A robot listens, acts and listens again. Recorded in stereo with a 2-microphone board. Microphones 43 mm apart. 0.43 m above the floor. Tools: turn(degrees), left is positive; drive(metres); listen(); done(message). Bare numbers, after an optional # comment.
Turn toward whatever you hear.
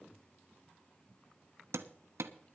turn(-90)
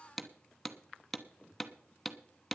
done("Facing the hammering, under 1 m away.")